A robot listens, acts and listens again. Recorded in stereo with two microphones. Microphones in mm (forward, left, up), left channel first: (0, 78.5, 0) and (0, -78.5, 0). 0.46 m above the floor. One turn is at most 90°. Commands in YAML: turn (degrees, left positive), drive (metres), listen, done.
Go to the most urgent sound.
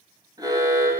turn: -25
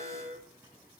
turn: -90
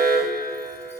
turn: -75
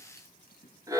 turn: -20
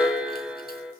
turn: -10
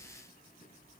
listen: true
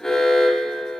drive: 1.0
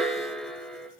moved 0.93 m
drive: 1.0
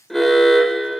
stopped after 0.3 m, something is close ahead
done: "Arrived at the alarm, straight ahead."